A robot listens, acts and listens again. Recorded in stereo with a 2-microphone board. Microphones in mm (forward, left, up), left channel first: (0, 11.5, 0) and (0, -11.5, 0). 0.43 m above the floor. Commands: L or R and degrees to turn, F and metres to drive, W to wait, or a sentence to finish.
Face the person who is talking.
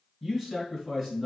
R30
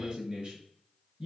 R135
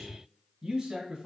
R30
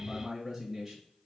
R10
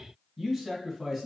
Facing the man speaking, 1 to 2 m away.